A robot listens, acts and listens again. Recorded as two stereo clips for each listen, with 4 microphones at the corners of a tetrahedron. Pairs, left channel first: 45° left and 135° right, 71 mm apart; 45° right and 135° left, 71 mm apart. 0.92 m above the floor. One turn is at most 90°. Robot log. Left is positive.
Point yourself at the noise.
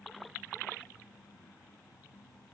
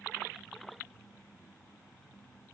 cmd idle
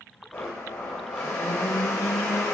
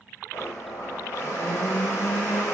note: The blender: 15° right.
cmd yaw -15
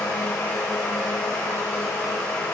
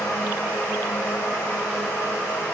end: Found it: a blender, straight ahead.